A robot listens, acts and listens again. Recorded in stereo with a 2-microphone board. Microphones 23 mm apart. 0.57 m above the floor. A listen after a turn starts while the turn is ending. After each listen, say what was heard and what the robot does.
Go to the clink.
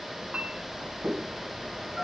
Turn 90° right.
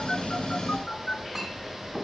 So it is at 15° right. Turn 15° right.
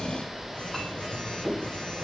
Drive 1.0 m forward.
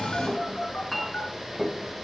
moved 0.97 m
Drive 1.0 m forward.
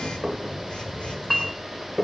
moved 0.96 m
Drive 1.0 m forward.
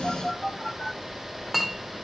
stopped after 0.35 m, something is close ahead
I am next to the clink.